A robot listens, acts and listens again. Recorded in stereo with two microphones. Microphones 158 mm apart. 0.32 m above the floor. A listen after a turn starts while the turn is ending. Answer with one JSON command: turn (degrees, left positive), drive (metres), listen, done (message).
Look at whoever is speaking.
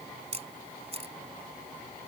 {"listen": true}
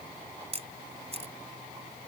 {"listen": true}
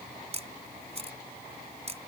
{"done": "I can't make out anyone speaking, only a camera shutter."}